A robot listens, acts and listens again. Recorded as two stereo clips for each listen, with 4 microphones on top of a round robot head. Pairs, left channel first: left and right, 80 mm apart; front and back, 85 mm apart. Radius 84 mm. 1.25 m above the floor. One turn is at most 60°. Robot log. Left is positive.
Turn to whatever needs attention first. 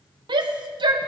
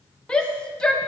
note: The shout: 80° right.
cmd yaw -60
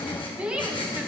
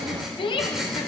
note: The shout is now 15° right.
cmd yaw -15
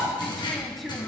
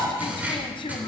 end: Found it: a shout, straight ahead, 1 to 2 m away.